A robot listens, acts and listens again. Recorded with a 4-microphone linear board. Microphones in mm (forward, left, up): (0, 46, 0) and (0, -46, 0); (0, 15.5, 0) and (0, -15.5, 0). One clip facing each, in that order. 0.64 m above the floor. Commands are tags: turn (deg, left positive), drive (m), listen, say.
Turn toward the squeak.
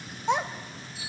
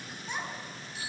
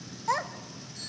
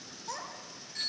<listen/>
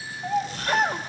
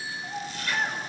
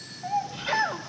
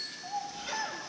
<turn deg="45"/>
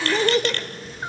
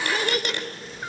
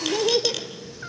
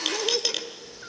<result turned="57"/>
<turn deg="-15"/>
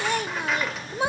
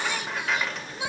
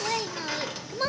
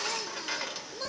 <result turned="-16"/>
<say>Facing the squeak.</say>